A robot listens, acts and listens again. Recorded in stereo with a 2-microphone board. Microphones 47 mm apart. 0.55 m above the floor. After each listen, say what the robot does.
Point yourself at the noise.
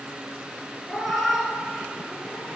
Turn 30° right.
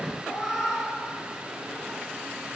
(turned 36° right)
Turn 30° left.
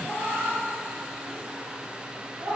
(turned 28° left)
Turn 60° right.
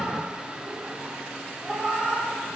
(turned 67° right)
Turn 10° left.
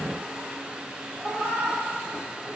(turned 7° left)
Facing the cat meowing.